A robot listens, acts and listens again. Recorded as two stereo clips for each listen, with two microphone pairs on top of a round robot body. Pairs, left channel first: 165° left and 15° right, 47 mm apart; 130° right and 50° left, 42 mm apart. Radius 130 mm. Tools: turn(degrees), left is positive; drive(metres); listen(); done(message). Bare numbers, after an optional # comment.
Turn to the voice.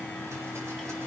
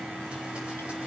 listen()
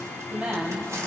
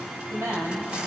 # The woman speaking: 50° left.
turn(50)
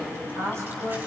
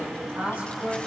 done("Facing the woman speaking.")